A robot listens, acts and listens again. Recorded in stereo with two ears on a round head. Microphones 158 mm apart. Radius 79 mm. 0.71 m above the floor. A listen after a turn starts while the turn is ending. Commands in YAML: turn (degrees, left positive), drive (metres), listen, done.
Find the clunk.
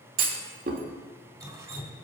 turn: -50
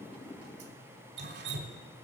listen: true
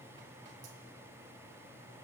done: "I heard a clunk, but can't make it out now. It was about straight ahead or 80° right."